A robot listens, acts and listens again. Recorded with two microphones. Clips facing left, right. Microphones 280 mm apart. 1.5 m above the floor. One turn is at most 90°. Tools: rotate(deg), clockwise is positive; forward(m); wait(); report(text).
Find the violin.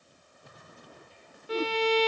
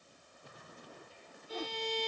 rotate(-75)
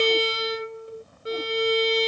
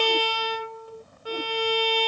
rotate(-25)
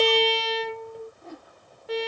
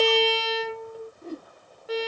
report("Facing the violin.")